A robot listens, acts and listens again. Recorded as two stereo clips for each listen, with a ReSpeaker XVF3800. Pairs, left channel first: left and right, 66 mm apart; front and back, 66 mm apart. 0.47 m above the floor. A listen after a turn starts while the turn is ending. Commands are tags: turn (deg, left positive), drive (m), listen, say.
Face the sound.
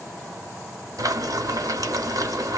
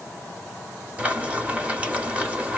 <turn deg="-110"/>
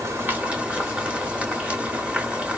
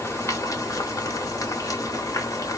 <turn deg="-20"/>
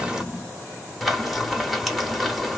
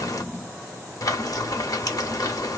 <say>Facing the frying, under 1 m away.</say>